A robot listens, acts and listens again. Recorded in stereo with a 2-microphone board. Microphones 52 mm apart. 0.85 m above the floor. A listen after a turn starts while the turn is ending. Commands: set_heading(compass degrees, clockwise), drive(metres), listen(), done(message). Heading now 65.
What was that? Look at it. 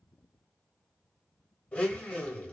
set_heading(40)
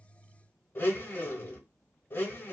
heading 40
set_heading(270)
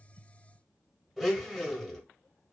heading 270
done("Found it: a blender, straight ahead.")